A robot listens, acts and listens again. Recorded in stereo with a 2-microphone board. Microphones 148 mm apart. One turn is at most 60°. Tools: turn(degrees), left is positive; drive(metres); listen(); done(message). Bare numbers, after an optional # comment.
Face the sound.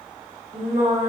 # The singing: about 60° right or 120° right.
turn(-60)
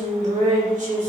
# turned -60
# So it is at 60° right.
turn(-60)
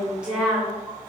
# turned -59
# The singing is now 10° right.
turn(-10)
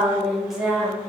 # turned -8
done("Found it: singing, straight ahead, over 4 m away.")